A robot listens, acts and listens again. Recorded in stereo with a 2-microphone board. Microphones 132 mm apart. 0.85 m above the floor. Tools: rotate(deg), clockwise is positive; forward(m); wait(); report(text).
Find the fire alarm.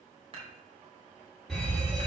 rotate(-30)
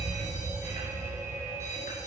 rotate(30)
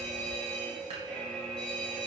report("Facing the fire alarm.")